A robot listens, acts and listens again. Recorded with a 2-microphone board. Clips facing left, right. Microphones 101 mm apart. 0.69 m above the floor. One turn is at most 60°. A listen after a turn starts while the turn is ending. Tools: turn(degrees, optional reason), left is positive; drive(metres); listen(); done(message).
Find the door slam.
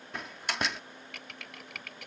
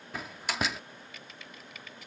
turn(degrees=30)
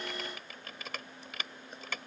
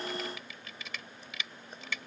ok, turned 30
listen()
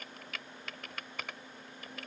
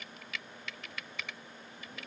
done("I heard a door slam, but can't make it out now. It was about 30° right or 150° left.")